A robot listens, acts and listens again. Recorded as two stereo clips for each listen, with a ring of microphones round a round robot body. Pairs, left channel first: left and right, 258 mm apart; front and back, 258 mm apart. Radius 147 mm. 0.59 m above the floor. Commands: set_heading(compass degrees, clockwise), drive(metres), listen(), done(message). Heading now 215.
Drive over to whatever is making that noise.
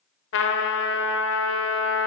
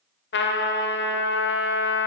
set_heading(165)
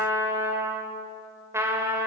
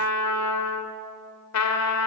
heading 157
set_heading(167)
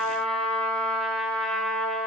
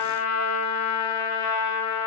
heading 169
drive(1.0)
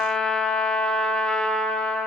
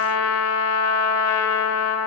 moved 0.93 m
drive(1.0)
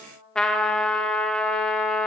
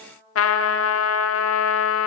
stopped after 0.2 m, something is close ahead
done("I am next to the trumpet.")